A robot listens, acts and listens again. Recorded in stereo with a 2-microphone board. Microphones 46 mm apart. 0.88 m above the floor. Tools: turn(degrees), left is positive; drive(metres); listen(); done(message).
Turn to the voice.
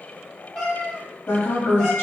turn(degrees=55)
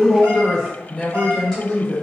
done("Facing the woman speaking.")